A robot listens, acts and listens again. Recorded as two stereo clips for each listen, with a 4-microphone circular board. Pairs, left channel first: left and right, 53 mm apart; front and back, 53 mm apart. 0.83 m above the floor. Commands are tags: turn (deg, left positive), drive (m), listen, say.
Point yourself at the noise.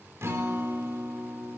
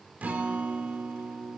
<turn deg="-120"/>
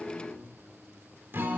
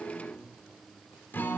<turn deg="-45"/>
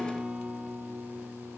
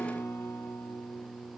<turn deg="-20"/>
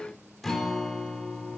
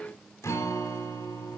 <say>Facing the guitar.</say>